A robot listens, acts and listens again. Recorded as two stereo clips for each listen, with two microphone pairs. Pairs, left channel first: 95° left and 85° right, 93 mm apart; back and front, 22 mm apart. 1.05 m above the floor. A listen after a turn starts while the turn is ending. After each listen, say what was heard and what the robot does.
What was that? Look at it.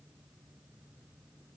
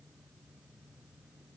Keep listening.
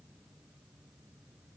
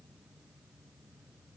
Keep listening.
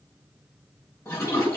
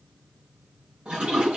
The toilet flushing: 35° left. Turn 35° left.
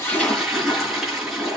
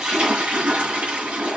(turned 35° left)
Facing the toilet flushing, over 4 m away.